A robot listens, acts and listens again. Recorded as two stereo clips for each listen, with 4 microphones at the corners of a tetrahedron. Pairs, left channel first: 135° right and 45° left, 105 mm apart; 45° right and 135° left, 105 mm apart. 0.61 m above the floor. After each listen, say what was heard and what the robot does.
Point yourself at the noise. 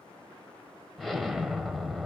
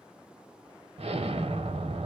The explosion: 135° left. Turn 135° left.
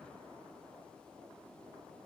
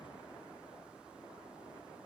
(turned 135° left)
I heard an explosion from this way, but can't make it out now.